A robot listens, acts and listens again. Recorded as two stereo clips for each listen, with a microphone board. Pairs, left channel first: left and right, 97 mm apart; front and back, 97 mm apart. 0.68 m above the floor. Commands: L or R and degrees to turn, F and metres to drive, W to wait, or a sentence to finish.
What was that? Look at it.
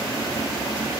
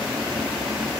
W
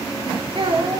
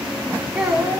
R95
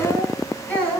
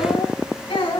L15
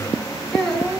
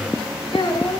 Found it: a child speaking, straight ahead, over 4 m away.